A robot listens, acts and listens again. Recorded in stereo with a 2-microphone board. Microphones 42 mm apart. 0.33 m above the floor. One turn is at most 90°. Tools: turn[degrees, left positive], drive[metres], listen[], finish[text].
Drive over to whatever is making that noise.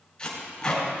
Thought: The tape being pulled: about 20° left or 160° left.
Action: turn[20]
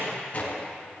Thought: So it is at 140° left.
Action: turn[90]
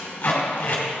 Thought: The tape being pulled is now 50° left.
Action: turn[50]
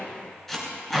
Action: drive[1.0]
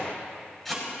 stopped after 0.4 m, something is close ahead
Action: finish[Blocked. The tape being pulled is further on, straight ahead.]